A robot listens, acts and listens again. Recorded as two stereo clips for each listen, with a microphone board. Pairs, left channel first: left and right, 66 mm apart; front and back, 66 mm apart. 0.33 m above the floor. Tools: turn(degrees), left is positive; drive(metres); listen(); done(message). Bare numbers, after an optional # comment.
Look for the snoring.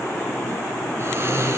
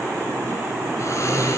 # The snoring: 40° right.
turn(-40)
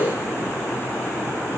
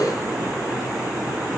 listen()
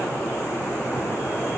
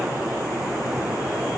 listen()
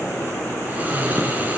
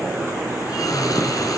# The snoring is now 25° right.
turn(-25)
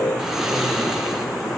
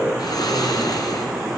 # The snoring is now 10° right.
turn(-10)
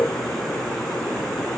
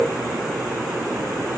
listen()
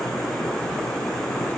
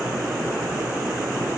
listen()
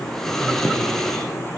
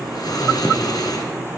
done("Facing the snoring, 2 to 4 m away.")